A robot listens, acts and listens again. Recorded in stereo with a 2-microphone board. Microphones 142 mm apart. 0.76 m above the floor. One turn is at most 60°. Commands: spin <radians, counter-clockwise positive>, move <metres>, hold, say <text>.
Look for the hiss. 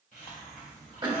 spin 1.05
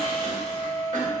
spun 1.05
hold
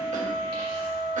hold
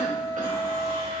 say I heard a hiss, but can't make it out now. It was about 10° left or 50° left.